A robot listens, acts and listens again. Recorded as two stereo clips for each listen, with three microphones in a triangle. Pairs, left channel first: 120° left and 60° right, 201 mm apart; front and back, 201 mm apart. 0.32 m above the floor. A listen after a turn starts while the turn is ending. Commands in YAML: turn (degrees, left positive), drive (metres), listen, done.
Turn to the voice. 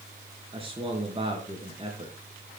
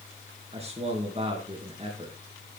turn: -120
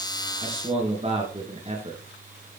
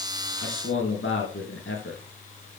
done: "Facing the man speaking."